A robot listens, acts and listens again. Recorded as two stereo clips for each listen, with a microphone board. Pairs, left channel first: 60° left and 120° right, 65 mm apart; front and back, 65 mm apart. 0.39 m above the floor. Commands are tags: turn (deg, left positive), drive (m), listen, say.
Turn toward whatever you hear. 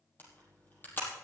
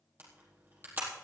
<turn deg="120"/>
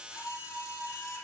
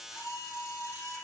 <turn deg="30"/>
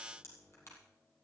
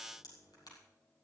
<turn deg="15"/>
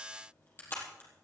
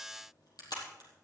<say>Found it: a camera shutter, straight ahead, over 4 m away.</say>